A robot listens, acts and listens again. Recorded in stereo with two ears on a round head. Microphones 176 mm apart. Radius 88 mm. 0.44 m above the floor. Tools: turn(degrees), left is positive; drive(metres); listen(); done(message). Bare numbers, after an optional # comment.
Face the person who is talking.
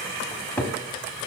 listen()
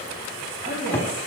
# The woman speaking: about 45° right or 135° right.
turn(-45)
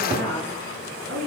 # So it is at 70° right.
turn(-70)
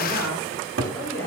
done("Facing the woman speaking, over 4 m away.")